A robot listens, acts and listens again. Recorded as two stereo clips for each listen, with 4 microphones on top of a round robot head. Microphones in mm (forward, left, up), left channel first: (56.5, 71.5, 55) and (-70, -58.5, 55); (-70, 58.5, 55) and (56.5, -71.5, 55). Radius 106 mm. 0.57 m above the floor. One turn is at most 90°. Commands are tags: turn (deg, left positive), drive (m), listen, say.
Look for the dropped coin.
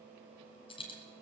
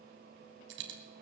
<turn deg="-20"/>
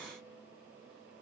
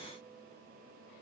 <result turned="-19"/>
<say>Facing where the dropped coin came from. I can't hear it now.</say>